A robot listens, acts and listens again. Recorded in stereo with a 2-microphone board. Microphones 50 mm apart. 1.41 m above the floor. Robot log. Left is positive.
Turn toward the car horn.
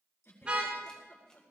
note: The car horn: about 25° right or 155° right.
cmd yaw -25
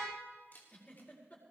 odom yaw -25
cmd idle
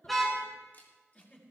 end: Found it: a car horn, straight ahead.